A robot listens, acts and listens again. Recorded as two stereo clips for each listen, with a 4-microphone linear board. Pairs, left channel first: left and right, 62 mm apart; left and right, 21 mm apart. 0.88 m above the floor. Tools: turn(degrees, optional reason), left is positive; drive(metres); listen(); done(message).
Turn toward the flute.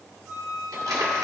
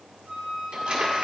turn(degrees=-30)
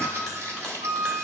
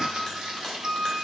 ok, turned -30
turn(degrees=-140, reason="So it is at 140° right.")
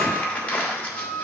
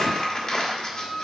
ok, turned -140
turn(degrees=-65, reason="The flute is now 65° right.")
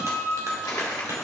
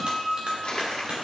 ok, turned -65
done("Facing the flute.")